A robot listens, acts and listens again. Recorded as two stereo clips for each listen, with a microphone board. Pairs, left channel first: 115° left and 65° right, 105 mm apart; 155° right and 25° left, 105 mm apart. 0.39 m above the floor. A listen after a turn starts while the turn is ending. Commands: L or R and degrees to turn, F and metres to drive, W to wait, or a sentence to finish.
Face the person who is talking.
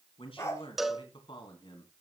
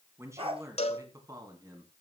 L70
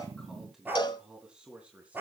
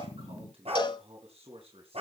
L10
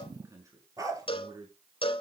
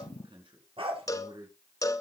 R15
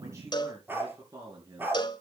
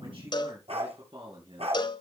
R10
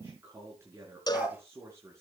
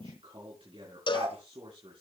Found it: a man speaking, straight ahead, over 4 m away.